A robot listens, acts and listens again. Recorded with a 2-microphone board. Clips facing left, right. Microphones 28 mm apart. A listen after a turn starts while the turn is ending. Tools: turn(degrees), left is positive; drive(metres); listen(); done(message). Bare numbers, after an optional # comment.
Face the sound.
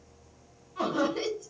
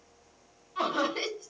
# The laughter: about 50° right or 130° right.
turn(-50)
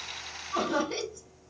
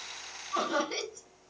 done("Facing the laughter.")